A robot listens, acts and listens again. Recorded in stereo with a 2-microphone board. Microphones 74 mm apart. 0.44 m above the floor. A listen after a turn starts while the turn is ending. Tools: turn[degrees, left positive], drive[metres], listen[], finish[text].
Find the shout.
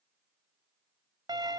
Action: listen[]
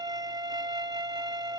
Action: listen[]
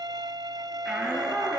Action: turn[-30]
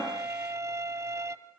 Action: listen[]
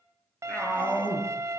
Thought: So it is at 20° left.
Action: turn[20]
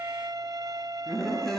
Action: finish[Found it: a shout, straight ahead, over 4 m away.]